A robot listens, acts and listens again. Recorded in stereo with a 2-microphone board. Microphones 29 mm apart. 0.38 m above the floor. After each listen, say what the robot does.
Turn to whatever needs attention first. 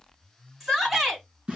Turn 30° right.
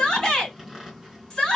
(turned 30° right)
Turn 25° left.
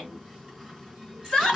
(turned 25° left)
Turn 15° left.
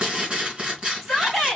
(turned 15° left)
Facing the shout.